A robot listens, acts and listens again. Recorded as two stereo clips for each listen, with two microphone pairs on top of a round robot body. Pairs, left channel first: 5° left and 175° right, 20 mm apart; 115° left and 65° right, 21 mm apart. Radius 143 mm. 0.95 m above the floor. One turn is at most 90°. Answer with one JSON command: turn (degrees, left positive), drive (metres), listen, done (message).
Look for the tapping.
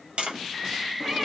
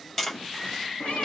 {"turn": -90}
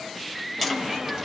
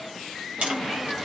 {"turn": -85}
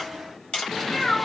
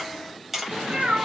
{"turn": 10}
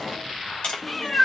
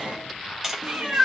{"done": "Facing the tapping."}